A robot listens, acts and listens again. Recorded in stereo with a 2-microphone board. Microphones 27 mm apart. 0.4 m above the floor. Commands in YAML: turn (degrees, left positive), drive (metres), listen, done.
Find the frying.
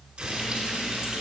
turn: -45
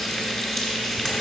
done: "Facing the frying, 1 to 2 m away."